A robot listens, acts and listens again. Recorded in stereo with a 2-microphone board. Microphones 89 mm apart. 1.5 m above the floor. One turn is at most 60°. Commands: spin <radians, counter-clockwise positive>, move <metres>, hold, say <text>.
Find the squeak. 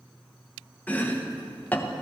hold
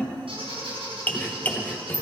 spin -1.05
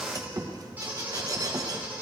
spin -0.35
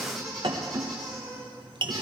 say Found it: a squeak, straight ahead, over 4 m away.